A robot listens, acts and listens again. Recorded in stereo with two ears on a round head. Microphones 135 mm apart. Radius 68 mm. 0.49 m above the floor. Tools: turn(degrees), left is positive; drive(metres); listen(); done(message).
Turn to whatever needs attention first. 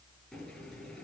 listen()
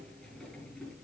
listen()
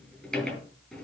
done("I can't make out anything urgent, only a sliding door.")